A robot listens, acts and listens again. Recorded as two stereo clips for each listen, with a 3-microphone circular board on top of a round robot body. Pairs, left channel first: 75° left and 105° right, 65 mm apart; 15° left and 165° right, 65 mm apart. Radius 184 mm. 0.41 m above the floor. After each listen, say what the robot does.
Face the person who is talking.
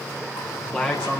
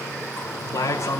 Facing the man speaking.